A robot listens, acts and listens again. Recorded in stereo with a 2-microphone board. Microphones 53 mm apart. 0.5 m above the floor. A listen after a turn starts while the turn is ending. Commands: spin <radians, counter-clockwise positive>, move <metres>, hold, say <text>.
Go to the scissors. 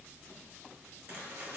hold
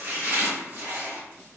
hold
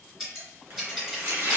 spin -0.52
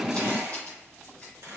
hold
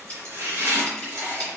spin 0.44
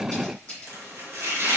hold
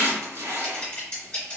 spin 0.35
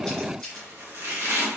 hold
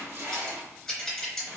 move 1.0
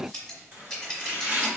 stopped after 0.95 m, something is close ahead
say Arrived at the scissors, straight ahead.